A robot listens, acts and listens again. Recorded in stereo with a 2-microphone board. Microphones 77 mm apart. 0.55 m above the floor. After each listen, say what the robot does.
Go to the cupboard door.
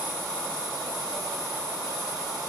Keep listening.
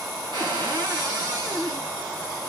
Turn 90° right.
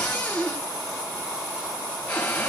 Turn 15° left.
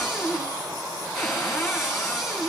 Drive 1.0 m forward.
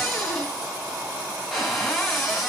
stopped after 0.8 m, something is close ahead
Something is in my way. I am facing the cupboard door but have not reached it.